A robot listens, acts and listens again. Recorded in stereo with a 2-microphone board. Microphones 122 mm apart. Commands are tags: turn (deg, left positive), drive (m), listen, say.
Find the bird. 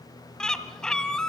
<turn deg="30"/>
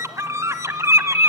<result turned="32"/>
<turn deg="-25"/>
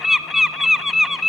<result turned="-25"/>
<say>Facing the bird, 1 to 2 m away.</say>